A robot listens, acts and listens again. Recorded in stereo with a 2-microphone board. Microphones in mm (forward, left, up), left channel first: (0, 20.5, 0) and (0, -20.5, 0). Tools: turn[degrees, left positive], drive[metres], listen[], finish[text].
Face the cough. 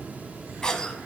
Thought: The cough: about 20° left or 160° left.
Action: turn[20]
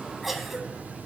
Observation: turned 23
Action: finish[Found it: a cough, straight ahead.]